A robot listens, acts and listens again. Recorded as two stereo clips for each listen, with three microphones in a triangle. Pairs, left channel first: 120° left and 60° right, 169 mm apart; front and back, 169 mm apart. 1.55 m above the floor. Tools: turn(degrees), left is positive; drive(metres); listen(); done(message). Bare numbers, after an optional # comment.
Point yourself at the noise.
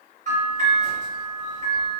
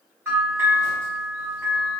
# The bell: 105° right.
turn(-105)
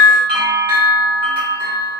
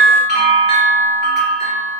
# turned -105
done("Facing the bell, 1 to 2 m away.")